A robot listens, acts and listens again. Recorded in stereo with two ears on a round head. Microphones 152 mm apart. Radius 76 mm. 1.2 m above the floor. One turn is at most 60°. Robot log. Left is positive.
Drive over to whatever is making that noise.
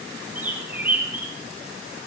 cmd yaw -30
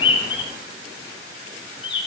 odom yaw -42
note: So it is at 30° left.
cmd yaw +30
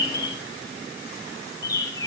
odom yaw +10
note: The bird is now 20° left.
cmd yaw +20
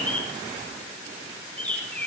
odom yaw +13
note: The bird is now 10° left.
cmd yaw +10
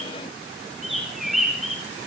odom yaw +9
cmd fwd 1.0
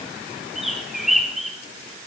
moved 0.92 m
cmd fwd 1.0
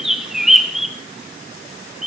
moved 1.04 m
cmd fwd 1.0
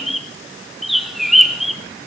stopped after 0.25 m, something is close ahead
end: Arrived at the bird, straight ahead.